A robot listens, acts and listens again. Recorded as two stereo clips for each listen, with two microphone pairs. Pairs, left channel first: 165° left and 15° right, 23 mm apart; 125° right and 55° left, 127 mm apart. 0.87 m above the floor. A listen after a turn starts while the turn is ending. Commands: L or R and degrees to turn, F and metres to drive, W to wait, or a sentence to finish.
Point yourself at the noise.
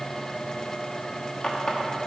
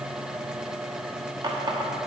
L110
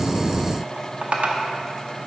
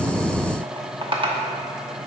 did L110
Facing the running tap.